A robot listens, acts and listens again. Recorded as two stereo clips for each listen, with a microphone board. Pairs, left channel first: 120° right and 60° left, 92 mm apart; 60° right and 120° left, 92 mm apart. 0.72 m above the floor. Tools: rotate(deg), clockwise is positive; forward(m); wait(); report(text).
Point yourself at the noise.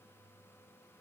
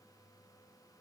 wait()
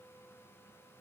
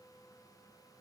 wait()
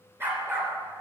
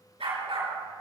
rotate(-125)
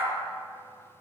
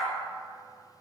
report("Facing the dog barking, over 4 m away.")